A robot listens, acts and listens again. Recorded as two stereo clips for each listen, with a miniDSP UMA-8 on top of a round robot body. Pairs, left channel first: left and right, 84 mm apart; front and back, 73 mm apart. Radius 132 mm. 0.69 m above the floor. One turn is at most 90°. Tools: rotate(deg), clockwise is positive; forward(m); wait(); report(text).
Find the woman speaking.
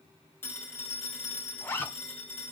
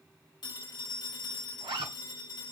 wait()
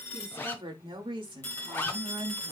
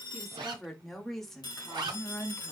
rotate(75)
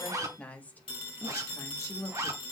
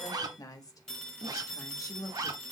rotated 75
rotate(-40)
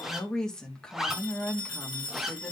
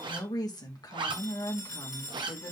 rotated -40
rotate(-10)
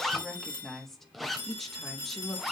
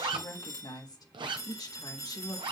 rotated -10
report("Found it: a woman speaking, straight ahead.")